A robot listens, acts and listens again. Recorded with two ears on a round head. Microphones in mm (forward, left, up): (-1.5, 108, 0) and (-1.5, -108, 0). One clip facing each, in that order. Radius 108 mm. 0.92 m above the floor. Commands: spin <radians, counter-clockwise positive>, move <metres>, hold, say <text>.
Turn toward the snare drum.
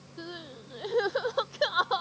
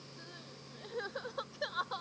hold
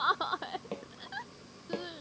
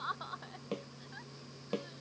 spin -0.35
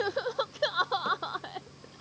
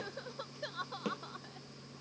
hold
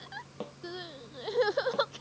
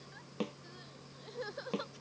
spin -2.44
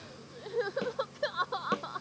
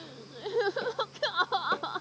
hold
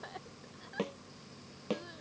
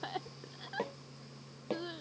spin 0.26
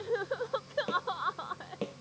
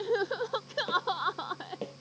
say Facing the snare drum.